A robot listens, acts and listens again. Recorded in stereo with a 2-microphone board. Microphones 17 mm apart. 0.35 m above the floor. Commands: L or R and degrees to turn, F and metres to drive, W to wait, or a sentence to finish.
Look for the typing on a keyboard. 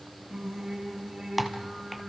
R30
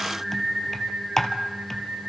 L20
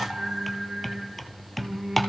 Facing the typing on a keyboard, 1 to 2 m away.